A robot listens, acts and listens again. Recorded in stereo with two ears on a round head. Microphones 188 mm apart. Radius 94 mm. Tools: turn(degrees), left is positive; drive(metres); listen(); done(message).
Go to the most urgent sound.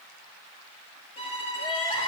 turn(degrees=25)
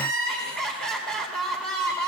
drive(metres=1.0)
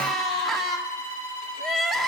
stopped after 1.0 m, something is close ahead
done("Arrived at the crying, straight ahead.")